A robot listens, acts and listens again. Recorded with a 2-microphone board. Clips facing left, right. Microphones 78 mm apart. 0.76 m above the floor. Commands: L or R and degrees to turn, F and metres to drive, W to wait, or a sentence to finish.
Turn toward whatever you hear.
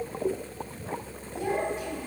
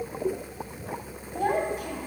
R55
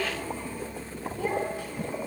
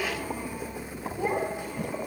R20
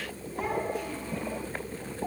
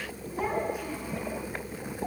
W
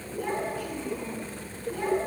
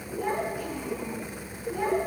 R15
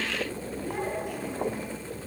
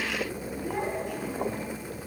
Facing the child speaking.